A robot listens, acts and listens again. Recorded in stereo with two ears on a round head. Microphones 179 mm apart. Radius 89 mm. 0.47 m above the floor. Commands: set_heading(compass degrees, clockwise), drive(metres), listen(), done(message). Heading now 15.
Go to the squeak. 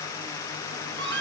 set_heading(75)
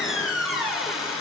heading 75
drive(1.0)
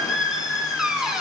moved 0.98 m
drive(1.0)
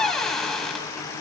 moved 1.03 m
drive(1.0)
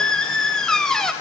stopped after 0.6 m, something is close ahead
done("Arrived at the squeak, straight ahead.")